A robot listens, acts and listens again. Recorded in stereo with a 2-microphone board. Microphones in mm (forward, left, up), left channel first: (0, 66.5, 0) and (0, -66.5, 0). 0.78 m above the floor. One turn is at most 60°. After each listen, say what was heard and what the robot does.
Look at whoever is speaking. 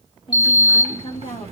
The woman speaking: about 40° left or 140° left. Turn 40° left.
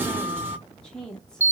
Facing the woman speaking.